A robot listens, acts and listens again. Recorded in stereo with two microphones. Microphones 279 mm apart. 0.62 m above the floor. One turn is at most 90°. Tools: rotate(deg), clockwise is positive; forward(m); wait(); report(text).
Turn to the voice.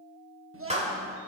rotate(50)
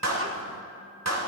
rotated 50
wait()
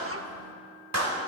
wait()
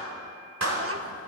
report("I heard a child speaking, but can't make it out now. It was about straight ahead or 80° right.")